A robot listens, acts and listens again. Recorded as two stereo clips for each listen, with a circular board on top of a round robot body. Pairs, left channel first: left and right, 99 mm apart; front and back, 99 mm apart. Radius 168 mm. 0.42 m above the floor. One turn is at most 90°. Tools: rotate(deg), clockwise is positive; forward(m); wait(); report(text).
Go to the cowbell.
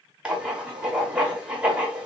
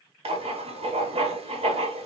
wait()
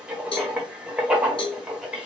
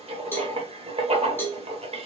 rotate(-65)
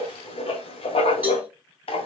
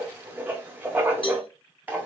rotate(15)
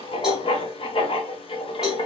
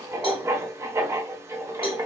forward(1.0)
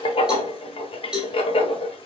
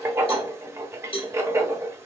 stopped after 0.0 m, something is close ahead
report("Something is in my way. I am facing the cowbell but have not reached it.")